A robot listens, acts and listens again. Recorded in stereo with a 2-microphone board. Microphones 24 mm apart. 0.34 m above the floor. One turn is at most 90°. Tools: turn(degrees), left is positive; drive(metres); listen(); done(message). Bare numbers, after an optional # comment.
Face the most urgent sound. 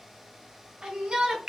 # The shout: about 45° right or 135° right.
turn(-45)
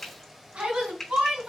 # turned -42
# So it is at 90° right.
turn(-90)
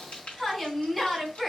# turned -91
done("Facing the shout, 2 to 4 m away.")